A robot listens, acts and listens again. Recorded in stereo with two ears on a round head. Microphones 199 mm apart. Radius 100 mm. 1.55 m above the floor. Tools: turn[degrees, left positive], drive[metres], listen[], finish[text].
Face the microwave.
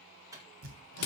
Action: turn[-30]
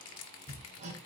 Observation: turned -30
Action: listen[]
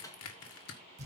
Thought: So it is at 15° left.
Action: turn[15]
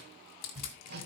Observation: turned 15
Action: listen[]
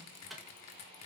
Action: finish[Found it: a microwave, straight ahead.]